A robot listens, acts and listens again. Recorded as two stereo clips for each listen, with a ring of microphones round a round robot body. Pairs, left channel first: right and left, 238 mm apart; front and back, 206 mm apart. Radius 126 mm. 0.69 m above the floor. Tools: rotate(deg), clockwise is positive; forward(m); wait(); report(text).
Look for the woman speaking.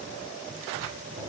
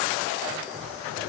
wait()
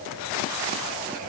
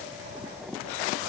wait()
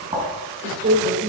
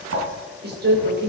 rotate(-145)
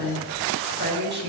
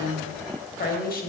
rotate(-45)
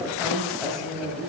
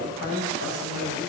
report("Facing the woman speaking.")